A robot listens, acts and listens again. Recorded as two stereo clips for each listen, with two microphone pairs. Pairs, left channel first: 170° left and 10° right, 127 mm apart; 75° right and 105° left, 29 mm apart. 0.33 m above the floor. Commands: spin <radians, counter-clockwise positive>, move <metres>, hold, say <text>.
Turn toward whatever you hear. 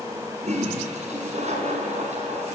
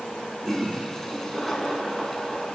say Found it: a toilet flushing, straight ahead, 2 to 4 m away.